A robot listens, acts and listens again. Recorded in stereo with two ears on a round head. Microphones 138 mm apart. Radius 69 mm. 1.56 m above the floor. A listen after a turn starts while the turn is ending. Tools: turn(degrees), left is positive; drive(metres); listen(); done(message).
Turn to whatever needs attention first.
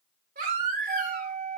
turn(degrees=-60)
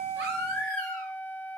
turn(degrees=-60)
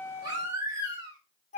turn(degrees=-25)
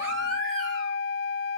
listen()
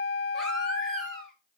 done("Facing the baby crying, 2 to 4 m away.")